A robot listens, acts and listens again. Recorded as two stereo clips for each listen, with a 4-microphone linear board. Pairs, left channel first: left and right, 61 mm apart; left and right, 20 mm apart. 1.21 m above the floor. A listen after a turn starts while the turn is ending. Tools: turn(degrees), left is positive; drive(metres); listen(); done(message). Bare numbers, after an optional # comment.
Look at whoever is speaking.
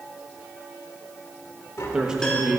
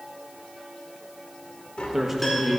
turn(-30)
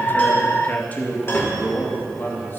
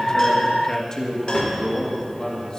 # So it is at 35° left.
turn(35)
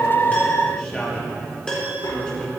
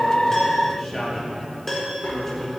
# The man speaking is now 15° left.
turn(15)
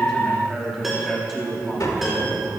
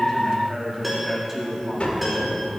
done("Found it: a man speaking, straight ahead, 2 to 4 m away.")